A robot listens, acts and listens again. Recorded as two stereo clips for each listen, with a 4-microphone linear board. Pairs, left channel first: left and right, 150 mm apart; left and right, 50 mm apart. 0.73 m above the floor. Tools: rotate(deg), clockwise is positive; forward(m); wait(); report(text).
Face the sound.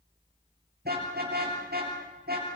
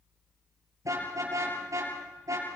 rotate(90)
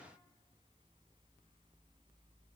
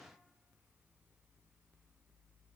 wait()
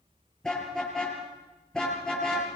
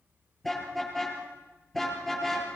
report("Facing the car horn.")